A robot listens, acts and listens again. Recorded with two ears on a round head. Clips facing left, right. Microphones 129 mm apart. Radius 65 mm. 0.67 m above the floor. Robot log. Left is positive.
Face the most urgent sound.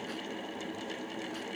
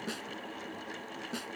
cmd idle
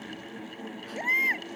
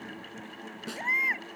note: The baby crying: about 35° left or 145° left.
cmd yaw +35
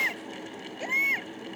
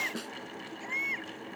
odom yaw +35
note: So it is at 110° left.
cmd yaw +110
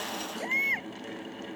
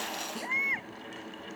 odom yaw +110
note: The baby crying is now 35° left.
cmd yaw +35
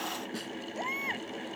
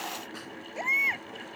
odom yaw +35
note: The baby crying is now 15° right.
cmd yaw -15
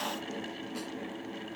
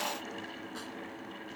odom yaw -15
cmd idle
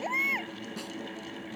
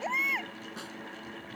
end: Found it: a baby crying, straight ahead.